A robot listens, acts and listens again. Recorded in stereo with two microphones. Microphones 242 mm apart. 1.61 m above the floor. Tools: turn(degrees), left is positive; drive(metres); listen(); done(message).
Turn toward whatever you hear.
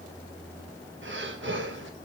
turn(degrees=-50)
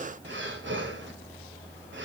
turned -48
turn(degrees=-65)
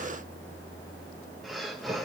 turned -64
done("Facing the breathing, 1 to 2 m away.")